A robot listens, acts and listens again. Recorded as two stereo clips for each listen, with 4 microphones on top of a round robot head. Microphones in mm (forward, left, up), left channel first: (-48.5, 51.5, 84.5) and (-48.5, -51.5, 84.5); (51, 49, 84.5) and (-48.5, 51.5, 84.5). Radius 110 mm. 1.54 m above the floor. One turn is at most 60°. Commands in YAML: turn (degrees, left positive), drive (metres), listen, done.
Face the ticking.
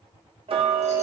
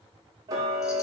turn: -60
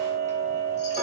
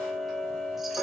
turn: -60
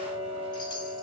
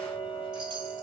turn: -45
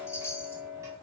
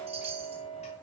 turn: -25
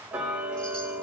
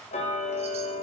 turn: -10
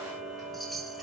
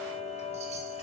done: "Found it: ticking, straight ahead, 1 to 2 m away."